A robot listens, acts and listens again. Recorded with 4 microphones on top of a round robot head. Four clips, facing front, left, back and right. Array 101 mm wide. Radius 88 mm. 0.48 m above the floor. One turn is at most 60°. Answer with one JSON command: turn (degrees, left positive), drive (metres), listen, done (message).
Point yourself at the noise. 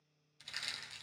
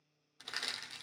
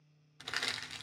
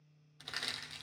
{"turn": 60}
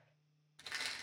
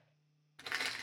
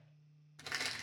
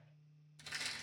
{"turn": 60}
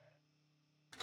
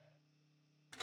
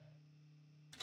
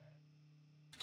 {"turn": 50}
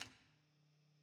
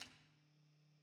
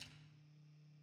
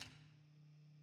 {"done": "Found it: crushing, straight ahead."}